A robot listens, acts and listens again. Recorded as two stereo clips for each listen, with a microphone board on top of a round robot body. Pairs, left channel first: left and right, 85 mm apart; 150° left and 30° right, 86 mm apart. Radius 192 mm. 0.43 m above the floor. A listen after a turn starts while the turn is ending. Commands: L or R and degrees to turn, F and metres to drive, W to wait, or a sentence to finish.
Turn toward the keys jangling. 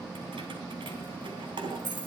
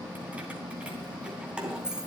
R110
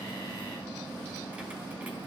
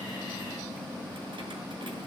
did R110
W
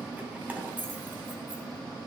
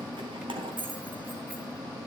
R20
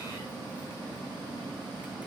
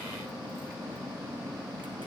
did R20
W
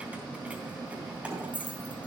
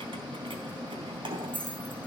R15
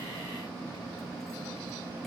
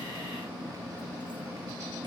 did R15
W
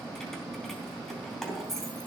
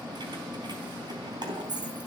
Found it: keys jangling, straight ahead, 2 to 4 m away.